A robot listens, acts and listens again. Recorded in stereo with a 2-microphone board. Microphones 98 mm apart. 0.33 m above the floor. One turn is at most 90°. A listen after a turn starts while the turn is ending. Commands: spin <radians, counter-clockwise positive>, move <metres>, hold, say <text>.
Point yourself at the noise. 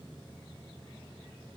hold
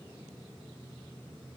hold
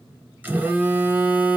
spin -0.35
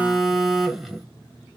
say Found it: a phone buzzing, straight ahead.